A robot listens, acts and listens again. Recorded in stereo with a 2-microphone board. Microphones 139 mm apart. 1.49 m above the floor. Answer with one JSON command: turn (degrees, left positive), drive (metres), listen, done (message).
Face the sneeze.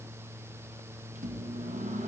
{"listen": true}
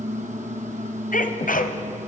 {"turn": 90}
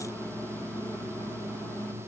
{"done": "Facing where the sneeze came from. I can't hear it now."}